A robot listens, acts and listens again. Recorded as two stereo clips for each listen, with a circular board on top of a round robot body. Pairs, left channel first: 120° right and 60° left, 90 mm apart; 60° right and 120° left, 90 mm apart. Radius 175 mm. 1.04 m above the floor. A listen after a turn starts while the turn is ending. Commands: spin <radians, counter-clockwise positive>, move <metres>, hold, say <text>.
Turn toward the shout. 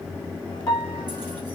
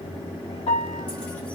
hold
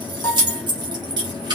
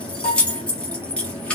hold
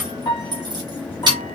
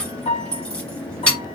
say I can't make out a shout, only keys jangling and a piano.